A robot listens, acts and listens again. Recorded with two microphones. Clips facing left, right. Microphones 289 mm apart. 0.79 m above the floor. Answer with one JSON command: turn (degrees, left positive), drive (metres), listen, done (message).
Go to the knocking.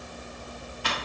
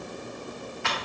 {"listen": true}
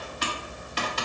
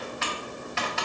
{"listen": true}
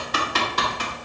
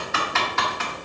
{"done": "I can't make out knocking, only typing on a keyboard."}